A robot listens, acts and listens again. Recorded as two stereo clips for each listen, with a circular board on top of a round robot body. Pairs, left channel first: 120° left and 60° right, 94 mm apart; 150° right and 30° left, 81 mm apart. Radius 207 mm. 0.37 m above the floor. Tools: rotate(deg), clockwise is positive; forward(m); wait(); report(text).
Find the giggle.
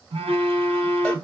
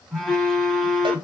wait()
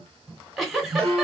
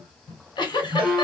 rotate(145)
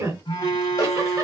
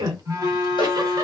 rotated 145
report("Found it: a giggle, straight ahead.")